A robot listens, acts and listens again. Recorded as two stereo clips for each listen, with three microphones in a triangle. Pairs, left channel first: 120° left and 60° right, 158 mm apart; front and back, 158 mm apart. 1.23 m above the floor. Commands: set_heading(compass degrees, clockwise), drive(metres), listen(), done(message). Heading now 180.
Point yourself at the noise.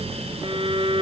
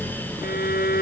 done("Found it: a violin, straight ahead.")